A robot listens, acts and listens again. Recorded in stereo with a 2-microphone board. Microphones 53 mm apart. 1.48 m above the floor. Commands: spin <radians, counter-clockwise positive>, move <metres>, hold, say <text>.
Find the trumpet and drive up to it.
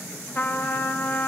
spin 0.70
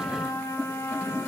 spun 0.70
spin 1.75
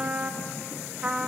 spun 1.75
spin -0.44
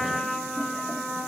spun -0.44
spin 0.17
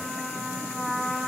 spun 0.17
move 1.0
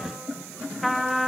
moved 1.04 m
move 1.0
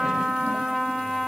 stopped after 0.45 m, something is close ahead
say I am next to the trumpet.